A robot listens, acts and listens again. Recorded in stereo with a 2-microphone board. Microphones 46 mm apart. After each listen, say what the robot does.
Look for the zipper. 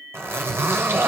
Turn 70° right.
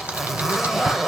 Turn 10° right.
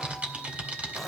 Keep listening.
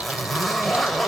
Found it: a zipper, straight ahead, 1 to 2 m away.